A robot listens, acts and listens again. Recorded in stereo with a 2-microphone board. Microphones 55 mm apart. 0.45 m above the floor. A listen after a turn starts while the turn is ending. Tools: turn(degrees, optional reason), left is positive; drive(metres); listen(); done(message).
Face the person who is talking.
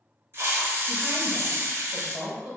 turn(degrees=-45, reason="The woman speaking: about 45° right or 135° right.")
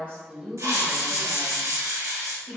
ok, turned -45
done("Facing the woman speaking, 1 to 2 m away.")